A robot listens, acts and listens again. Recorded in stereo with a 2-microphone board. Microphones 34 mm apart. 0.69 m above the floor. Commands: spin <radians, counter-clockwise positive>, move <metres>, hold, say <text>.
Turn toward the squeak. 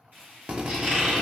spin -0.61
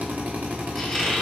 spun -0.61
say Facing the squeak, 2 to 4 m away.